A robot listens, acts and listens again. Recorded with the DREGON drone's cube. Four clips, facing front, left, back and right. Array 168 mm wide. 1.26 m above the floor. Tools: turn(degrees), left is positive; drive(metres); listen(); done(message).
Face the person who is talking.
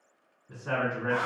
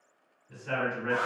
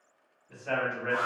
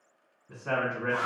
turn(degrees=-55)
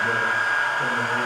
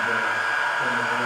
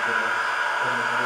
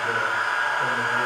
listen()
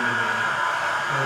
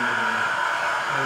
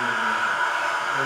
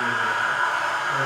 listen()
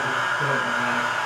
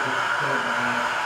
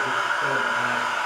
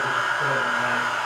done("I heard a man speaking from this way, but can't make it out now.")